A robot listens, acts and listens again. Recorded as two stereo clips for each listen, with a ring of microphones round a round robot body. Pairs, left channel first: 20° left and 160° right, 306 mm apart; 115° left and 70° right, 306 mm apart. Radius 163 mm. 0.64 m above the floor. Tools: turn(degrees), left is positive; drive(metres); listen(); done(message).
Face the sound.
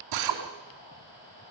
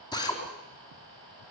turn(degrees=-170)
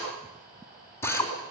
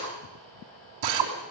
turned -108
turn(degrees=-60)
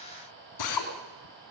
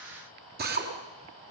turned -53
done("Facing the drill.")